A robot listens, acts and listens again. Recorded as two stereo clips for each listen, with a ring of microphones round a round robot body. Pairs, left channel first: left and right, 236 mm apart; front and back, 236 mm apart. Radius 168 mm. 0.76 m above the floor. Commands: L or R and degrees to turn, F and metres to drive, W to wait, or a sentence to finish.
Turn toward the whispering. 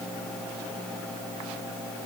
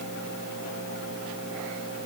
W
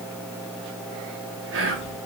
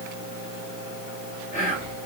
R65
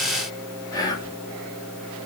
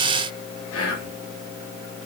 L15
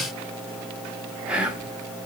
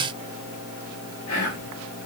Facing the whispering.